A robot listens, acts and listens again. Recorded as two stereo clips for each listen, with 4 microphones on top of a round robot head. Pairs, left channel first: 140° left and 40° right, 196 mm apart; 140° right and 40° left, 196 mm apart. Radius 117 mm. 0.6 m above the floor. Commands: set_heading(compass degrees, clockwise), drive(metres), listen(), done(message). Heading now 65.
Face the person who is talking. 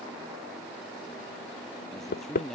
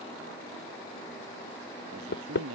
set_heading(15)
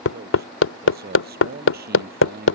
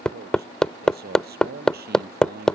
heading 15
done("Found it: a man speaking, straight ahead.")